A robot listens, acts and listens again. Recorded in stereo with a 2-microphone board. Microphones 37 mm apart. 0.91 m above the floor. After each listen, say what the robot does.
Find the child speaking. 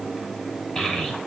Turn 25° left.
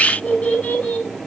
Turn 130° left.
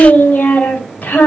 Turn 45° left.
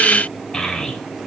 Turn 15° left.
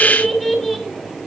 Facing the child speaking.